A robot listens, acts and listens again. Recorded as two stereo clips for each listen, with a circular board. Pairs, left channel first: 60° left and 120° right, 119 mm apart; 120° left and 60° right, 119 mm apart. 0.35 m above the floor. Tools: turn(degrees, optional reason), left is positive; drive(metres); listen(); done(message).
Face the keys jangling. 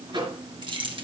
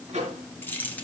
turn(degrees=-165, reason="The keys jangling: 165° right.")
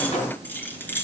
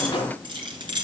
turn(degrees=-15, reason="The keys jangling is now 15° right.")
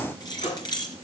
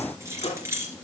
done("Found it: keys jangling, straight ahead.")